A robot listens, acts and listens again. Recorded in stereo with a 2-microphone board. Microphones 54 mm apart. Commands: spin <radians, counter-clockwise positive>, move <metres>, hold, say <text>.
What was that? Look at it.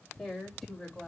spin 0.52
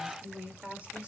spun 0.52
spin -0.35
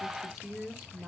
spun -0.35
say Facing the woman speaking, 2 to 4 m away.